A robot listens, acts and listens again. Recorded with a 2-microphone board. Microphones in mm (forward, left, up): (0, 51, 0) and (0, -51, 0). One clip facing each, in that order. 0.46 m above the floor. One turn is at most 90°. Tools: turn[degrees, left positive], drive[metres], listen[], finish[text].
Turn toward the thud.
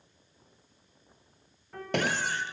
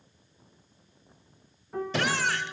Thought: The thud: about 60° left or 120° left.
Action: turn[60]
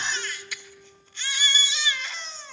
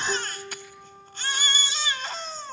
Action: listen[]
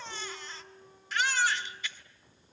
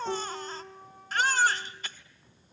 Action: finish[I heard a thud, but can't make it out now. It was about straight ahead or 60° left.]